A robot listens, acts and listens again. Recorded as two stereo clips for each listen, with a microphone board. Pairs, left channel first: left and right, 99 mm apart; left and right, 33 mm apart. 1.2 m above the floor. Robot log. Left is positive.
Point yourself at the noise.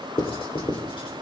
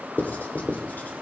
note: The writing: about 65° left or 115° left.
cmd yaw +65
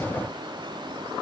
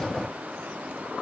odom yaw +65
cmd idle
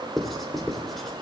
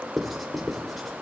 end: Found it: writing, straight ahead, 2 to 4 m away.